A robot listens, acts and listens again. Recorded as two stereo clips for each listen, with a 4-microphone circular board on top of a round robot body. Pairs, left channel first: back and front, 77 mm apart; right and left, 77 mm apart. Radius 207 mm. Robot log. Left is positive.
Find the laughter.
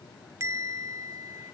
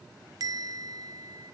cmd idle
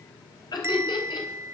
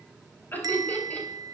note: The laughter: 160° right.
cmd yaw -160
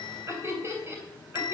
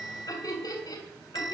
note: The laughter is now 55° right.
cmd yaw -55
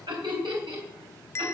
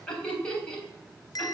note: The laughter is now 15° right.
cmd yaw -15
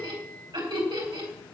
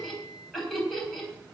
end: Facing the laughter, over 4 m away.